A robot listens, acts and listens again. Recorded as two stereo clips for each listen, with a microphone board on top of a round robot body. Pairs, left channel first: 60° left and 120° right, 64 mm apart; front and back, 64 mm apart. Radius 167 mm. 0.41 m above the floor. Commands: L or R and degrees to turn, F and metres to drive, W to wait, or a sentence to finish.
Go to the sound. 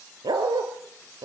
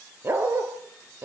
R125
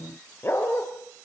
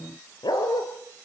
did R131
F1.0
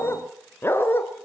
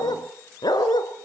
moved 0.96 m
F1.0
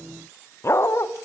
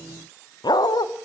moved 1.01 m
L10
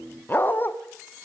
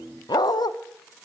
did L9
F1.0
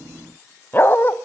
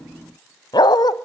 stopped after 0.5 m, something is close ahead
Arrived at the dog barking, straight ahead.